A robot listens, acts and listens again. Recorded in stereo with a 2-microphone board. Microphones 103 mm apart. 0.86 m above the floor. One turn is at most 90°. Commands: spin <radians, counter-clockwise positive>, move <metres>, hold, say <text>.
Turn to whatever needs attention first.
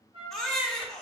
spin 0.52
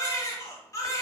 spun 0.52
spin 1.57
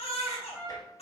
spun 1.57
spin 1.40
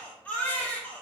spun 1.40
spin 0.26
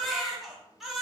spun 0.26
say Found it: a baby crying, straight ahead.